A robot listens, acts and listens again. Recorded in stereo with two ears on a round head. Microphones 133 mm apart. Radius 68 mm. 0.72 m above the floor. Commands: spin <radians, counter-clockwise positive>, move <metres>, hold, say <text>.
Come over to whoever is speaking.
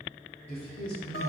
spin 0.79
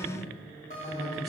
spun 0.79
spin 1.57
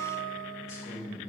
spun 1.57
spin 0.44
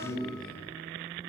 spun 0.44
move 1.0
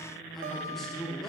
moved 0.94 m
move 1.0
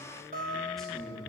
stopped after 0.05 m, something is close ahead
say I am next to the man speaking.